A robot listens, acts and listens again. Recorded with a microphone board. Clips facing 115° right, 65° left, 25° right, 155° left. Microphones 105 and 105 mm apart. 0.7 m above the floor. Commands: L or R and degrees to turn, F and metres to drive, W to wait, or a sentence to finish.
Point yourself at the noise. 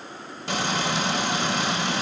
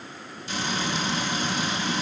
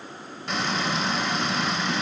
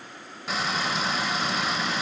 R115
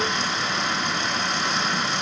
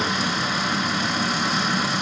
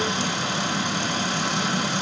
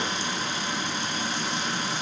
R20
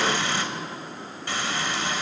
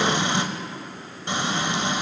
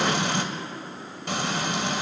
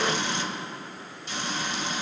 Found it: frying, straight ahead.